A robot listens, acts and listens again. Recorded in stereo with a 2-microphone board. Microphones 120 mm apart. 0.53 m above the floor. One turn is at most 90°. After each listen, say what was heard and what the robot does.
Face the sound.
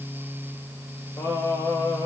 The singing: about 25° left or 155° left. Turn 25° left.
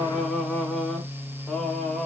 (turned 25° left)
Found it: singing, straight ahead.